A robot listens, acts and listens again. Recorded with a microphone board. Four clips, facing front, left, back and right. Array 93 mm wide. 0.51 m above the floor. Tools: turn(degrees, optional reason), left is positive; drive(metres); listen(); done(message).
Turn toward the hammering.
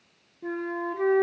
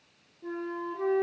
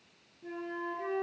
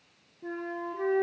listen()
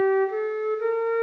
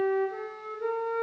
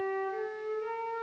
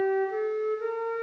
listen()
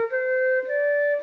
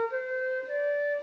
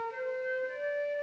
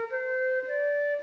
done("I can't make out hammering, only a flute.")